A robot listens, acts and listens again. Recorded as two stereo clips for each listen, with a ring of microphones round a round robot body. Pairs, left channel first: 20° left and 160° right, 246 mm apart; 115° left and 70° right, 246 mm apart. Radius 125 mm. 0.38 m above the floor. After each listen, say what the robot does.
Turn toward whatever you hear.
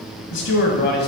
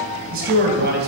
Turn 20° right.
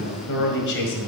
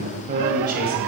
Turn 20° right.
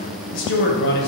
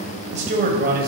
Turn 20° right.
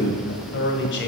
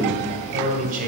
Turn 20° right.
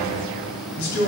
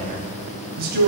Turn 20° right.
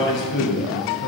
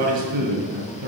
Turn 20° right.
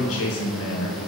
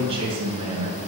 Found it: a man speaking, straight ahead, 2 to 4 m away.